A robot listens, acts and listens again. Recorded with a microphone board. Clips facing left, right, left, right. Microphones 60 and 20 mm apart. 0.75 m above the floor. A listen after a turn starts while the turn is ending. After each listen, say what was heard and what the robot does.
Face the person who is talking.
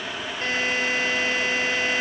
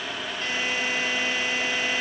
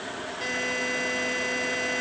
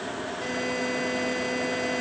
Keep listening.
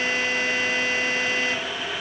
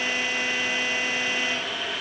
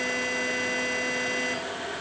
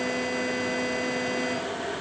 Keep listening.
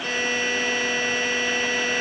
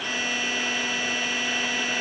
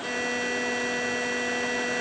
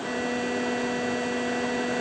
I can't make out anyone speaking to turn to.